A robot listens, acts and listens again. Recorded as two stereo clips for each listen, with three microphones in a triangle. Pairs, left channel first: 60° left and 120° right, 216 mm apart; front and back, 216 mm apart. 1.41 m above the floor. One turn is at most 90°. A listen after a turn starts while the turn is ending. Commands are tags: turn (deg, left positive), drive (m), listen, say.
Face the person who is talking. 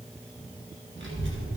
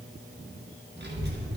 <turn deg="-90"/>
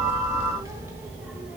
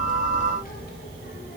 <turn deg="-35"/>
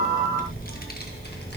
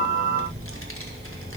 <turn deg="20"/>
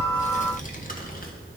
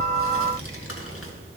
<turn deg="10"/>
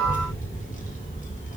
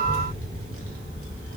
<say>Facing the child speaking, 1 to 2 m away.</say>